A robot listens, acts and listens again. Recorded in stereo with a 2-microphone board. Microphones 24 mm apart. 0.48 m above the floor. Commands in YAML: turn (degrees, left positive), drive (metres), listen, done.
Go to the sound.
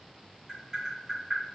turn: -25
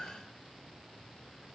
listen: true
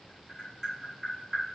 drive: 1.0
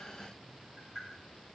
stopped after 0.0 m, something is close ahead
turn: -10
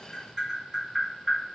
done: "Blocked. The tapping is further on, straight ahead."